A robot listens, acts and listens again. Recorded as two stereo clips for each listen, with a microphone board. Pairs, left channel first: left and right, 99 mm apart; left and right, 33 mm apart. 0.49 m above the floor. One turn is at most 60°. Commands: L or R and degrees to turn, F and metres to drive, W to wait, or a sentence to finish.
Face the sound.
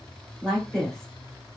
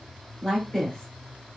L30
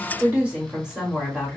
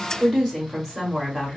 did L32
Found it: a woman speaking, straight ahead.